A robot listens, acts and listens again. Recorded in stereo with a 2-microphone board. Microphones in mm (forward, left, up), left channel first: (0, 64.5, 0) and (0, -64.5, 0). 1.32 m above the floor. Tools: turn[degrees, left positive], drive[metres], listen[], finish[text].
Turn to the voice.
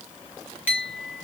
Action: listen[]
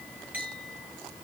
Action: listen[]
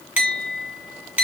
Action: finish[I can't make out anyone speaking, only a clink.]